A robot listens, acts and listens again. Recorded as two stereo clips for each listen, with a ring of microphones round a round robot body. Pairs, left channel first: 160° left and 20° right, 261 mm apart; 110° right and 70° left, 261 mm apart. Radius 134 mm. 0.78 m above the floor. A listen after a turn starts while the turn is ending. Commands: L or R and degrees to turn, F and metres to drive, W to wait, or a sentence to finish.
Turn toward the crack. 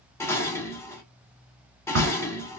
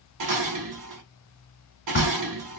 R60
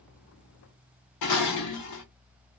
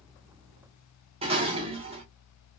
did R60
I heard a crack from this way, but can't make it out now.